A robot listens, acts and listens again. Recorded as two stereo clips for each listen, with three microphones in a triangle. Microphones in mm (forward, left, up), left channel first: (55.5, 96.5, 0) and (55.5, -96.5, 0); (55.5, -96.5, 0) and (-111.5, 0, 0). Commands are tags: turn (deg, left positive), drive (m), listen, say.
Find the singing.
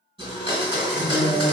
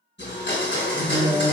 <turn deg="-115"/>
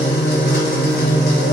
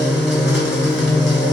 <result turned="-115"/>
<turn deg="-20"/>
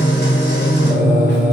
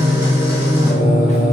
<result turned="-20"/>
<turn deg="-10"/>
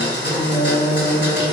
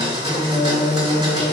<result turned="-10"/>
<say>Facing the singing, 1 to 2 m away.</say>